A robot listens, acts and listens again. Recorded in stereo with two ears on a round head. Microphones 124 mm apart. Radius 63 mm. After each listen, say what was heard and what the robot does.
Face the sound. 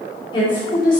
The woman speaking: about 35° left or 145° left. Turn 35° left.
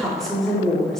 Facing the woman speaking, 2 to 4 m away.